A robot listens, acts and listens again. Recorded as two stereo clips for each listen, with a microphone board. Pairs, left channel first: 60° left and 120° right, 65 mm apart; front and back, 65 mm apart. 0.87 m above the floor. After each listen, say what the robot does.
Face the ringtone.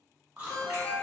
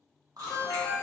Facing the ringtone.